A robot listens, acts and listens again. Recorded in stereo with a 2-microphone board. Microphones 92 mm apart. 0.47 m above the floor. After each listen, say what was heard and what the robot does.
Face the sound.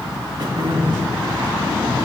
The throat clearing: about 50° right or 130° right. Turn 50° right.
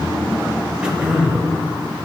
So it is at 10° right. Turn 10° right.
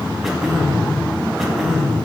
Found it: throat clearing, straight ahead.